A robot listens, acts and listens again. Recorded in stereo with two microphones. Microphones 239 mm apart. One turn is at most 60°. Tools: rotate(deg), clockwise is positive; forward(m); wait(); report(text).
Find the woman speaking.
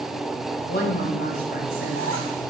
rotate(-45)
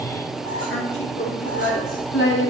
rotate(-60)
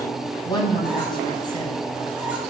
rotate(-20)
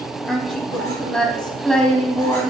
report("Found it: a woman speaking, straight ahead.")